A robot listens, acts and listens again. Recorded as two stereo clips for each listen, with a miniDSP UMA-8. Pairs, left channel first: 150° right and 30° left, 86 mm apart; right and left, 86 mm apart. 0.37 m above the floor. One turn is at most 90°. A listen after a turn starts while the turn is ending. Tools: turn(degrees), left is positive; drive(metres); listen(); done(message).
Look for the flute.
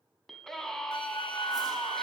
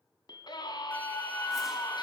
turn(degrees=-90)
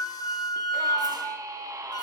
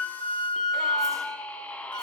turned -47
turn(degrees=-90)
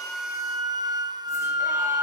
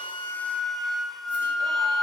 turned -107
done("Found it: a flute, straight ahead, 1 to 2 m away.")